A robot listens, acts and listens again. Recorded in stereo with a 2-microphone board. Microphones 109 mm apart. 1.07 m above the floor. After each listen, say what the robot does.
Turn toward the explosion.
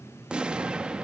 Turn 30° right.
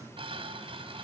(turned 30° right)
Keep listening.
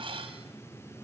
I heard an explosion, but can't make it out now. It was about 20° left or 140° right.